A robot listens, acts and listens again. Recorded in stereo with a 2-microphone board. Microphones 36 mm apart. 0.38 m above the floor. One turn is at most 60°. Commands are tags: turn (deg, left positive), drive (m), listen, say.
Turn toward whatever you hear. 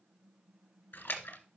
<turn deg="60"/>
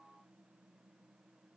<turn deg="30"/>
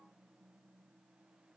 <say>Facing where the splash came from. I can't hear it now.</say>